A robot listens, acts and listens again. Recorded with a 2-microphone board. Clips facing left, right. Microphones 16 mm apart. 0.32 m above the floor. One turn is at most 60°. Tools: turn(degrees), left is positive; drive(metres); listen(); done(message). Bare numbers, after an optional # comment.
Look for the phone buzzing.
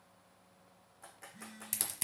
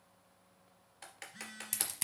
# The phone buzzing: about 45° right or 135° right.
turn(-45)
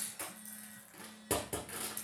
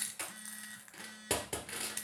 # So it is at 90° right.
turn(-60)
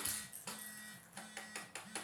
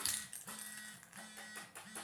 # The phone buzzing is now 15° right.
turn(-15)
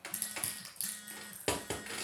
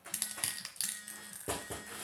done("Found it: a phone buzzing, straight ahead, under 1 m away.")